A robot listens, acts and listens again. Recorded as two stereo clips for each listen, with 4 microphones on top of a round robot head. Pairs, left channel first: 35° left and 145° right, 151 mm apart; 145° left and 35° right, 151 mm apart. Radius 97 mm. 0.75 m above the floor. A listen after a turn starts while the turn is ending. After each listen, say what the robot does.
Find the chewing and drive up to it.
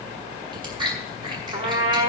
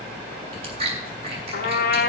Turn 85° right.
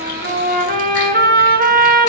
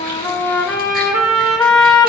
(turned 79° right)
Keep listening.
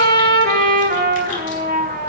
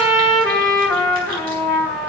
Keep listening.
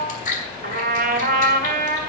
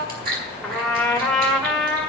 Drive 1.0 m forward.
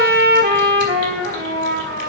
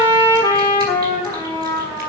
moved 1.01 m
Keep listening.
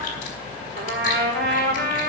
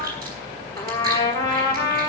Keep listening.
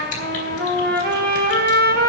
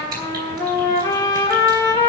I heard chewing from this way, but can't make it out now. I did not reach it.